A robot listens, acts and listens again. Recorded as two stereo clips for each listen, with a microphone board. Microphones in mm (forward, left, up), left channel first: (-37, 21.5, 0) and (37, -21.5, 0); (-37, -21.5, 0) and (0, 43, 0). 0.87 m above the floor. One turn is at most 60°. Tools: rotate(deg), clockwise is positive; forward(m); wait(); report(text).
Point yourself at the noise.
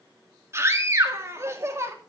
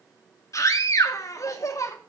rotate(60)
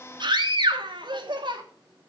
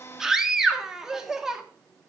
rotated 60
rotate(25)
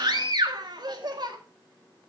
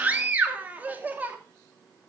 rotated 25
report("Found it: a scream, straight ahead.")